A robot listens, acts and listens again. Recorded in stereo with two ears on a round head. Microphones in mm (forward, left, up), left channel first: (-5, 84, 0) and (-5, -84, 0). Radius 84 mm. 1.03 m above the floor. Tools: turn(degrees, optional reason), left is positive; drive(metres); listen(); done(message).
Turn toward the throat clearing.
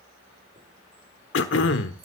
turn(degrees=70, reason="The throat clearing: about 70° left or 110° left.")
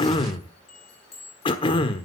turn(degrees=30, reason="So it is at 30° left.")
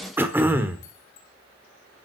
turn(degrees=-10, reason="The throat clearing is now 10° right.")
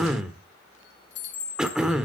done("Facing the throat clearing.")